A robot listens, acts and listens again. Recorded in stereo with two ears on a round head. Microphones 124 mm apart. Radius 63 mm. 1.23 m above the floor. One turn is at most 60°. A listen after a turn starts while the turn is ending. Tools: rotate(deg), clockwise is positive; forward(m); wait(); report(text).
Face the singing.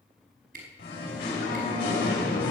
rotate(-60)
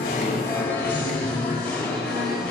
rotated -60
report("Facing the singing, over 4 m away.")